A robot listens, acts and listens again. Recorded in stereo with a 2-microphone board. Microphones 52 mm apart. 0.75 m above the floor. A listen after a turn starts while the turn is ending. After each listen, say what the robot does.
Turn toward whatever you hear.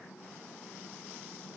Keep listening.
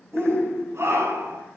Turn 70° right.
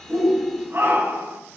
Turn 40° right.
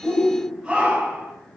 Turn 10° right.
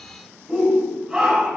Found it: a shout, straight ahead, over 4 m away.